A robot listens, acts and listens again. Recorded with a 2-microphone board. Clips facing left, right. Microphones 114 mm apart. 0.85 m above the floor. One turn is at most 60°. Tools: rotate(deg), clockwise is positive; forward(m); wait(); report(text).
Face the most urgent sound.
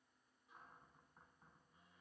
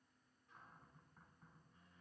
wait()
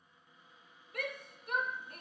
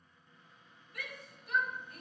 rotate(-60)
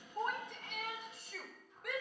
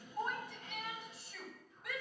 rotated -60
rotate(-60)
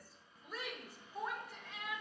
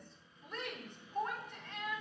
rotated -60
report("Facing the shout, 2 to 4 m away.")